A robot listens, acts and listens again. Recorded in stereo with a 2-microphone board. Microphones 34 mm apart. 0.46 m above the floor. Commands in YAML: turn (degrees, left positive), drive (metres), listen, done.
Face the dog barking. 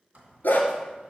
turn: 70
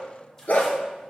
turn: 60
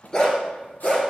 turn: 30
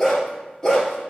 turn: 20
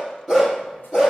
turn: 15
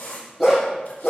done: "Facing the dog barking, 2 to 4 m away."